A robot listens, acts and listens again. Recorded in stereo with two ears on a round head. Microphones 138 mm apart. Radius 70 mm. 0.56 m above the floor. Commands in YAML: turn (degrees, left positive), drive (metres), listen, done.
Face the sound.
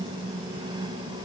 listen: true
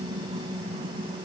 listen: true
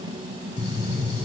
turn: 40
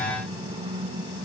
listen: true
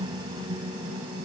done: "I heard a gunshot, but can't make it out now. It was about straight ahead or 100° left."